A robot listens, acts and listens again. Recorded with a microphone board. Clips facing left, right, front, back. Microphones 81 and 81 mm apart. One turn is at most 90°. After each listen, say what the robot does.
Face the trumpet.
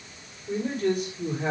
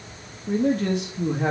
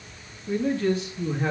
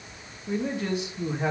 Keep listening.
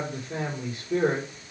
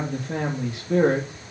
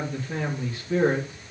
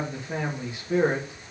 Keep listening.
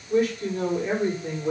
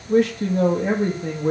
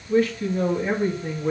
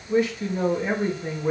I can't make out a trumpet, only a man speaking.